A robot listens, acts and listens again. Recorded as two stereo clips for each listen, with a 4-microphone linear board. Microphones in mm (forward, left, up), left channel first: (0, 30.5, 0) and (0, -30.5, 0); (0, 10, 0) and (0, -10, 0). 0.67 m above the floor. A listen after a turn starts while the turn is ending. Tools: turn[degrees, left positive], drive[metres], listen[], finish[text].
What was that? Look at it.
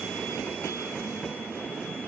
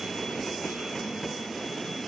Action: listen[]
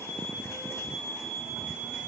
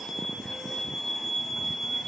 Action: listen[]
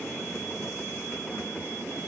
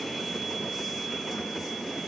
Action: finish[I can't make out anything to turn to.]